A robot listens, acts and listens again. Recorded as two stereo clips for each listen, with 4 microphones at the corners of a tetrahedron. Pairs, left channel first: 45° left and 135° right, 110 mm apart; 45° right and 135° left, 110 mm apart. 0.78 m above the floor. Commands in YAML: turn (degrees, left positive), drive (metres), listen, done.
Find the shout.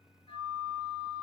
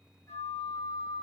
listen: true
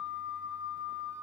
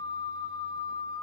listen: true
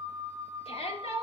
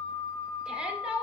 turn: 55
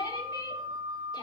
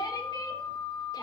done: "Facing the shout, 2 to 4 m away."